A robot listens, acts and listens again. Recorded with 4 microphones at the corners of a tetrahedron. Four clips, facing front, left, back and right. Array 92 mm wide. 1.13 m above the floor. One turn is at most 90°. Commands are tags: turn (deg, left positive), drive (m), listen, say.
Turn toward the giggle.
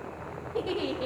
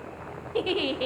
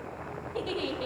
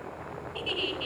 <turn deg="80"/>
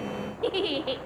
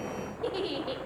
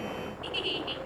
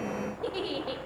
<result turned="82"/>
<say>Found it: a giggle, straight ahead.</say>